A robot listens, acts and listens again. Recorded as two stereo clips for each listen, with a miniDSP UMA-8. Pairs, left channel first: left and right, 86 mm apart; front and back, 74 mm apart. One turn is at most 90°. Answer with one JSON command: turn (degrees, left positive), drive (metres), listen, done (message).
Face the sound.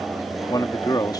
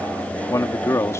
{"turn": 50}
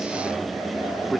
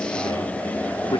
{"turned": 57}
{"listen": true}
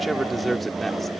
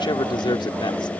{"done": "Found it: a man speaking, straight ahead."}